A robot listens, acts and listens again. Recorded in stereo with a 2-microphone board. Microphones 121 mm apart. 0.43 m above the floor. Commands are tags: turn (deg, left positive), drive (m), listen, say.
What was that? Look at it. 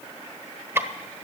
<turn deg="-20"/>
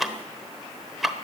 <say>Facing the ticking.</say>